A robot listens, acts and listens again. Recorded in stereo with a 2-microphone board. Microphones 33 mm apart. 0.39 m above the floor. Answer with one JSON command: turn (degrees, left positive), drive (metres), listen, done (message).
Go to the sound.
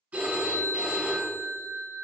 {"turn": -55}
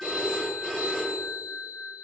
{"drive": 1.0}
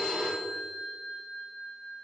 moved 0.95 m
{"drive": 1.0}
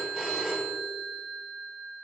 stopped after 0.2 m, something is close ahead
{"done": "Arrived at the phone ringing, straight ahead."}